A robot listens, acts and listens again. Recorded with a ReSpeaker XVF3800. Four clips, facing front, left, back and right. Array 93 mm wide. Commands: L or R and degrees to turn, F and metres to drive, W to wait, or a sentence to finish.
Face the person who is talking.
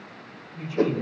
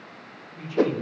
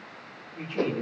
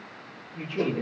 R135
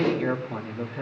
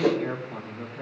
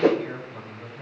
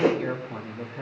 R20
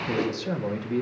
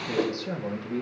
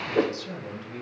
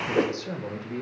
R10
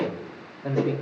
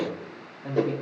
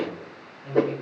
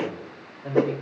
Found it: a man speaking, straight ahead.